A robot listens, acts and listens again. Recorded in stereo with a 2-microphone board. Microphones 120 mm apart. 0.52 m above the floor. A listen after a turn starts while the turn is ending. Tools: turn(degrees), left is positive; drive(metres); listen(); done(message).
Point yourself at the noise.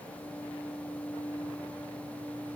listen()
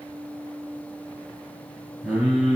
turn(degrees=-30)
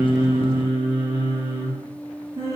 turn(degrees=-155)
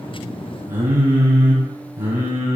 turn(degrees=-20)
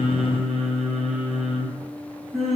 done("Found it: singing, straight ahead, over 4 m away.")